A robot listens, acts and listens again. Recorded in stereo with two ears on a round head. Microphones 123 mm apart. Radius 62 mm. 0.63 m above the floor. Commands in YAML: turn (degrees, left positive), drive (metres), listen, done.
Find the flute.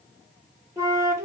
turn: -20
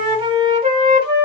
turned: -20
turn: -135
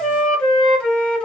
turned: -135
done: "Facing the flute."